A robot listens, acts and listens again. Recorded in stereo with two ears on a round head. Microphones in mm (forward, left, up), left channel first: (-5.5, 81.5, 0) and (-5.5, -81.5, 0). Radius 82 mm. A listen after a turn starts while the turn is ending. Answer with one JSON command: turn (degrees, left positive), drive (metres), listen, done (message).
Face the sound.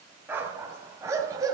{"turn": -20}
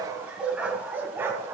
{"turn": -30}
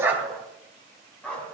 {"done": "Found it: a dog barking, straight ahead, 2 to 4 m away."}